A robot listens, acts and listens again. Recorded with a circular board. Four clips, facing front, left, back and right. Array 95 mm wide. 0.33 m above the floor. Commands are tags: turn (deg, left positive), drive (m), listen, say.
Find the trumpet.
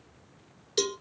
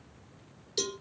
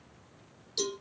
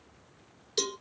<listen/>
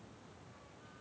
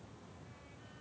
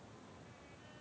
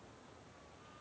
<listen/>
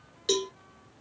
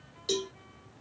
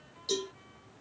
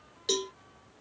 <say>I can't make out a trumpet, only a cowbell.</say>